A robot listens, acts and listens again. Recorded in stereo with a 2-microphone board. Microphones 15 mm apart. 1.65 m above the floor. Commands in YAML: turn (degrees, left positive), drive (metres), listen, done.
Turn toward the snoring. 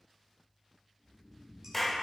turn: 70
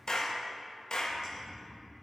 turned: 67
turn: 45
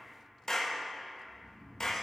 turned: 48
done: "Facing the snoring."